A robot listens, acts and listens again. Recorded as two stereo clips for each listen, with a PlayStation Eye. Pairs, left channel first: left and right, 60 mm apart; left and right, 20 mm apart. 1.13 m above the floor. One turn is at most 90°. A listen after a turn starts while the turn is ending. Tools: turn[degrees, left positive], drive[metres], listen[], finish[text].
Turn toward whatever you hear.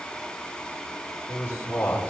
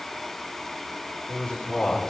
Thought: The man speaking: about 25° left or 155° left.
Action: turn[25]
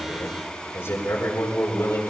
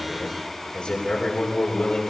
Thought: The man speaking: about 40° left or 140° left.
Action: turn[40]
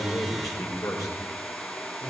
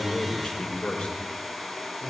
Thought: So it is at 110° left.
Action: turn[90]
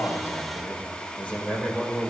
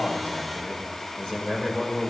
Thought: The man speaking is now 25° left.
Action: turn[25]
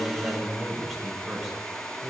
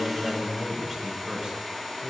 Action: finish[Found it: a man speaking, straight ahead, over 4 m away.]